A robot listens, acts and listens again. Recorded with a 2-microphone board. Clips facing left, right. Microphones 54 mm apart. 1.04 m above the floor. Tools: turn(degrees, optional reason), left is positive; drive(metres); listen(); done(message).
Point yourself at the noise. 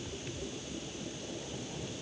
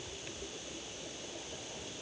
listen()
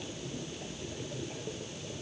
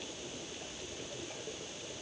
listen()
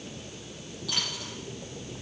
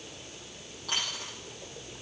turn(degrees=-40, reason="The dropped coin: about 40° right or 140° right.")
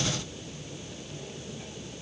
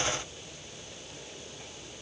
listen()
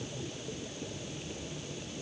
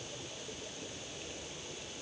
done("I heard a dropped coin, but can't make it out now. It was about straight ahead or 100° right.")